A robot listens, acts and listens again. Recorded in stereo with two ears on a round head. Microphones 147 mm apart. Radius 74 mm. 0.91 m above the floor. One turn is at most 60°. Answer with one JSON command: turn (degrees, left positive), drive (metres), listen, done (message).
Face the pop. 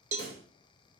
{"turn": -60}
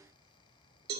{"turn": -30}
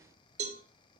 {"done": "I heard a pop from this way, but can't make it out now."}